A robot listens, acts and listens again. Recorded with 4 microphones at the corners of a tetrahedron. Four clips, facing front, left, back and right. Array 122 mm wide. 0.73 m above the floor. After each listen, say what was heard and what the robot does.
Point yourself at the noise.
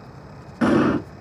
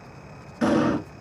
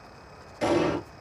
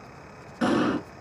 The explosion: 10° right. Turn 10° right.
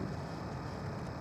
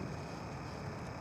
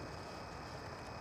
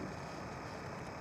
I heard an explosion from this way, but can't make it out now.